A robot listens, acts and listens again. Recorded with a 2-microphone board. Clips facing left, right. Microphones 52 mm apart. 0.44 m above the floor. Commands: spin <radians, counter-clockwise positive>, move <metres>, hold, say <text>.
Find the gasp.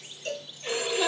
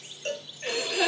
spin -1.57
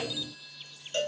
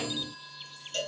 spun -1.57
say I heard a gasp from this way, but can't make it out now.